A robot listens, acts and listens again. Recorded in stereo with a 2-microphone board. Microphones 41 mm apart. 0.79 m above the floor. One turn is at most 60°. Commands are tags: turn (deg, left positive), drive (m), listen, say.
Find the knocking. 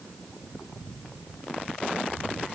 <listen/>
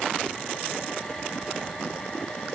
<listen/>
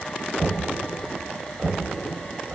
<turn deg="-55"/>
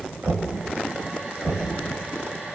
<turn deg="-60"/>
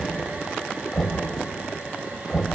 <turn deg="10"/>
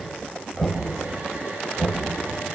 <say>Found it: knocking, straight ahead, 2 to 4 m away.</say>